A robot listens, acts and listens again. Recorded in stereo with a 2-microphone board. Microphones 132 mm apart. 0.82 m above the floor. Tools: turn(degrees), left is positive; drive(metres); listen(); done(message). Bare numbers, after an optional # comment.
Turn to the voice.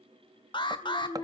# The child speaking: about 30° left or 150° left.
turn(30)
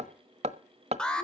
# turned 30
listen()
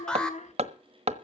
# So it is at 120° left.
turn(120)
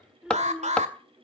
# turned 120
done("Facing the child speaking.")